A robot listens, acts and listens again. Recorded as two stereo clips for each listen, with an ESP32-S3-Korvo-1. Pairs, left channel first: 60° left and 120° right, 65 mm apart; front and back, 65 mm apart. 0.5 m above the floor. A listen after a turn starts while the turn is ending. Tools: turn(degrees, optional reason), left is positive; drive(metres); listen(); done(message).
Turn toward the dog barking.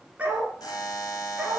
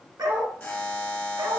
turn(degrees=160, reason="The dog barking: 160° left.")
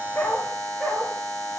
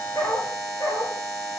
turn(degrees=-20, reason="The dog barking is now 20° right.")
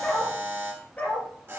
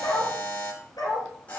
turn(degrees=-10, reason="The dog barking is now 10° right.")
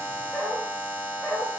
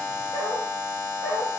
done("Facing the dog barking.")